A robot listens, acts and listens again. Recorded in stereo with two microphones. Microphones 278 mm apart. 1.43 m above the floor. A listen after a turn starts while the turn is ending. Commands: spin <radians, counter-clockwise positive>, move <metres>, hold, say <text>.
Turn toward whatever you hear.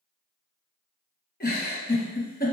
spin 0.61
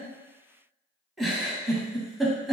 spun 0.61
say Facing the giggle, under 1 m away.